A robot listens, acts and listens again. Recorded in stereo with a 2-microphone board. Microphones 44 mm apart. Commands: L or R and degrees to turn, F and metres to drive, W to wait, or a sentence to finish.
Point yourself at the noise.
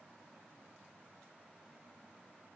W
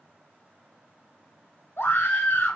L55
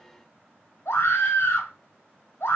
L75
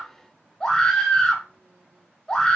L20
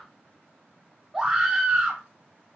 Found it: a scream, straight ahead.